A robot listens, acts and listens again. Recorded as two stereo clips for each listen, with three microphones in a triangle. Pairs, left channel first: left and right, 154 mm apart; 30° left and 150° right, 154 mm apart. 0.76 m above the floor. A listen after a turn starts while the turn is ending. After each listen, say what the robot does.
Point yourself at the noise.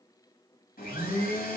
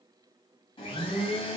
Turn 85° left.
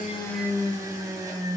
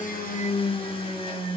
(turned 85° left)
Turn 25° right.
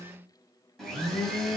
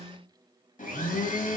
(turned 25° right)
Facing the blender, 1 to 2 m away.